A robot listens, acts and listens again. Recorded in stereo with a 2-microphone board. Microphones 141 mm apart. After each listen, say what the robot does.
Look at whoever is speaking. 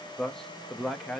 Turn 30° left.
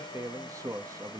Turn 30° right.
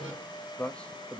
Turn 10° left.
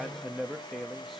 Found it: a man speaking, straight ahead.